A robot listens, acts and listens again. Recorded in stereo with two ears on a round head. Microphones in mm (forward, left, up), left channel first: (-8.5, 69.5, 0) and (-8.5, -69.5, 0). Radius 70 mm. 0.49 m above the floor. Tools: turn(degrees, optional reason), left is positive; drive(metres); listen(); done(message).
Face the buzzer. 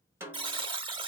turn(degrees=-30, reason="The buzzer: about 30° right or 150° right.")
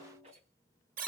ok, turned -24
turn(degrees=-120, reason="So it is at 120° right.")
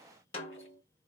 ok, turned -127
listen()
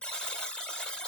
done("Facing the buzzer, 1 to 2 m away.")